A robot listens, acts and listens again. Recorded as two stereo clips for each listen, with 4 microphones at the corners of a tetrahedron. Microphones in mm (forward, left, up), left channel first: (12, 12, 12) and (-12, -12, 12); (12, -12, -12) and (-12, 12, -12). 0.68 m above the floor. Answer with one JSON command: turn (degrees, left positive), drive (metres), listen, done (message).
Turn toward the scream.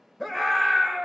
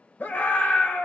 {"turn": -40}
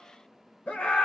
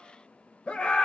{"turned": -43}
{"done": "Facing the scream."}